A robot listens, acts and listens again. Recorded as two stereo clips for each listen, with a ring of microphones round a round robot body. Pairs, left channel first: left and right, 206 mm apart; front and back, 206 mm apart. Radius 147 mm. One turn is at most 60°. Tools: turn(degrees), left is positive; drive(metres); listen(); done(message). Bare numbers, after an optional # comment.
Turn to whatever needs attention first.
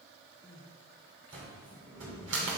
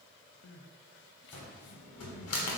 # The crying: 10° left.
turn(10)
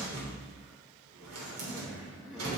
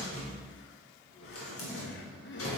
done("Facing the crying.")